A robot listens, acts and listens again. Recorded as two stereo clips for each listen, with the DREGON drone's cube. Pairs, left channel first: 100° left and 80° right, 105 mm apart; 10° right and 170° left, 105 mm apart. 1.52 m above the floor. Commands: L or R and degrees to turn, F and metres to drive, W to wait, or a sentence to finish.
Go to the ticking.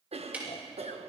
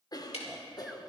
F1.0
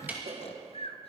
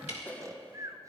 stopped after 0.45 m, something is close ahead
Blocked. The ticking is further on, straight ahead.